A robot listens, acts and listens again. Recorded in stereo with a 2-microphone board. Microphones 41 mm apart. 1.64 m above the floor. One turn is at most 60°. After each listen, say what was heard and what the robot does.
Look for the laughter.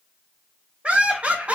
The laughter: about 35° right or 145° right. Turn 35° right.
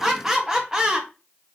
So it is at 20° right. Turn 20° right.
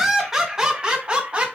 The laughter is now 30° right. Turn 30° right.
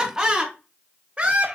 The laughter is now 30° right. Turn 30° right.
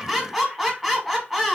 Facing the laughter, 1 to 2 m away.